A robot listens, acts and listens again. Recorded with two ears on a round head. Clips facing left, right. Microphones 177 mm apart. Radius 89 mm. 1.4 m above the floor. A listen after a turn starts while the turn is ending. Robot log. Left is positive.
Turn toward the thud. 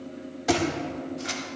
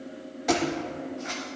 cmd yaw +30
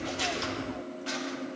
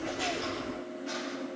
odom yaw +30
cmd idle
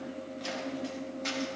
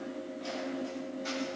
end: I heard a thud, but can't make it out now. It was about 25° right or 145° left.